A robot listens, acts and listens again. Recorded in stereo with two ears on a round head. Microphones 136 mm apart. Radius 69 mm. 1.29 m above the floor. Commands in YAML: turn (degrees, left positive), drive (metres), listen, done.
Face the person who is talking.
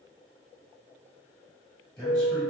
turn: 30
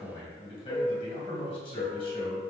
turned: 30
turn: 140
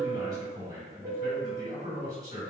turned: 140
turn: -25
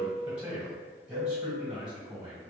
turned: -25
done: "Facing the man speaking, 1 to 2 m away."